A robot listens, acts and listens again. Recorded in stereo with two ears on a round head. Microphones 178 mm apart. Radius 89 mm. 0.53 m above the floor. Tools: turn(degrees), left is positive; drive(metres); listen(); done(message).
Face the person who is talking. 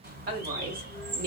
turn(degrees=-45)
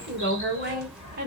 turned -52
turn(degrees=-40)
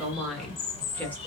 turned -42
turn(degrees=10)
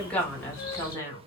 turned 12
turn(degrees=20)
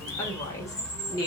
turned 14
turn(degrees=20)
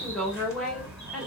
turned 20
done("Facing the woman speaking, 1 to 2 m away.")